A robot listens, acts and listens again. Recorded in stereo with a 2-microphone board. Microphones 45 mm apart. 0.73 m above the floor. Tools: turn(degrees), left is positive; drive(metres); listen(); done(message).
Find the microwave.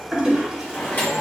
turn(degrees=40)
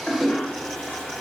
listen()
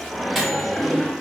done("Facing the microwave.")